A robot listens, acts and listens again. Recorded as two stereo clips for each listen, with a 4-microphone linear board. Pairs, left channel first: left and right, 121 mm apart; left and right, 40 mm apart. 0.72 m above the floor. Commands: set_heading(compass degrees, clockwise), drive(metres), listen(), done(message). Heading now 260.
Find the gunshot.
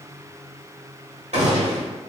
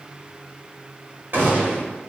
set_heading(325)
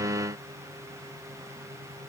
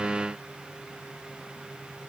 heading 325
listen()
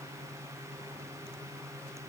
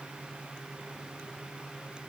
done("I heard a gunshot, but can't make it out now. It was about straight ahead or 50° right.")